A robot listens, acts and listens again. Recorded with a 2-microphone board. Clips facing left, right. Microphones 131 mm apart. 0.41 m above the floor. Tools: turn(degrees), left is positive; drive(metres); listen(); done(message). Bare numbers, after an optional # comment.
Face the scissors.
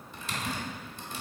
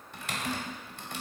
listen()
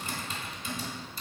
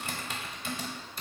listen()
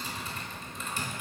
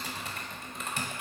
done("I can't make out scissors, only typing on a keyboard.")